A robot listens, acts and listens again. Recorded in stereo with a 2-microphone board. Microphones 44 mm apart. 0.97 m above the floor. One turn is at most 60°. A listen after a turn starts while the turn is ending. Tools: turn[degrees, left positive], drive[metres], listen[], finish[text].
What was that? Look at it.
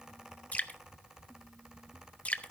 Thought: The dripping: about 35° left or 145° left.
Action: turn[35]
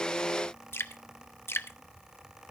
Thought: So it is at 110° left.
Action: turn[60]
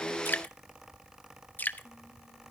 Thought: The dripping is now 45° left.
Action: turn[45]
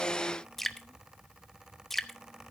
Action: finish[Facing the dripping.]